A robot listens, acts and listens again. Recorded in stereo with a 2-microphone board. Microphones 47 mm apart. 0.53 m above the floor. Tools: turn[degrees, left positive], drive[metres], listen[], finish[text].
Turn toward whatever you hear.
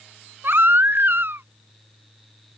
Thought: The baby crying: about 50° right or 130° right.
Action: turn[-50]
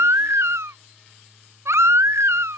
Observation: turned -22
Thought: So it is at 105° right.
Action: turn[-105]
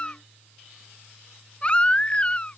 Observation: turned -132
Thought: The baby crying is now 25° left.
Action: turn[25]
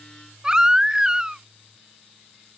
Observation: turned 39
Thought: The baby crying is now 15° right.
Action: turn[-15]
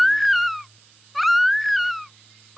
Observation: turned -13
Action: finish[Facing the baby crying.]